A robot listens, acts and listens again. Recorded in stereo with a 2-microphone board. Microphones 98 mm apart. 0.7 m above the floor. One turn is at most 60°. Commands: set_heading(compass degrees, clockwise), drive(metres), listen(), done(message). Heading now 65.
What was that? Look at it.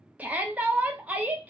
set_heading(95)
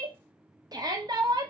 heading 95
set_heading(155)
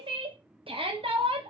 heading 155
set_heading(215)
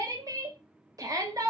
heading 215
set_heading(255)
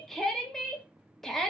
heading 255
done("Facing the shout.")